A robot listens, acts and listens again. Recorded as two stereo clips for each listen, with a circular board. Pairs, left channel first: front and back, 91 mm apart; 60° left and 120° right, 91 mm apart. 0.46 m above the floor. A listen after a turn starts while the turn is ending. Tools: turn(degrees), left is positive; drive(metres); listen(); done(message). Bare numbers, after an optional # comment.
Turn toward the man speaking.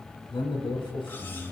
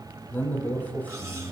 # The man speaking: 15° right.
turn(-15)
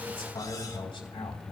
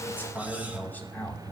# The man speaking is now 15° right.
turn(-15)
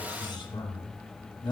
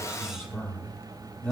# The man speaking is now 20° right.
turn(-20)
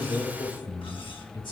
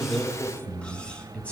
# The man speaking is now 15° right.
turn(-15)
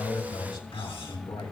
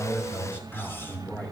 # The man speaking is now 10° right.
turn(-10)
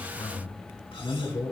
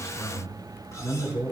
done("Facing the man speaking, 2 to 4 m away.")